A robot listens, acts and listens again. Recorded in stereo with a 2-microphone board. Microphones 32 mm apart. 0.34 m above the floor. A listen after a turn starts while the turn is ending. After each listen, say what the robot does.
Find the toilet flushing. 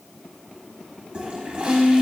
Turn 30° right.
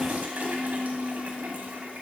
Turn 115° right.
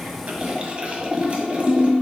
Turn 40° right.
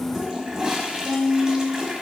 Turn 25° right.
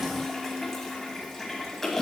Turn 10° left.
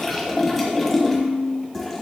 Facing the toilet flushing.